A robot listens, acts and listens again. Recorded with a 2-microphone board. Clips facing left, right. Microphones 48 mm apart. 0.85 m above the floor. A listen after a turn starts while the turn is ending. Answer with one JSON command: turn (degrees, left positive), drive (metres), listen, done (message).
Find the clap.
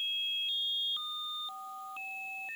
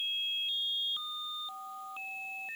{"listen": true}
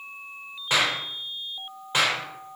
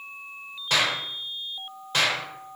{"turn": 20}
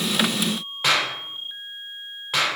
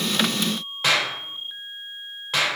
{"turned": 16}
{"done": "Facing the clap."}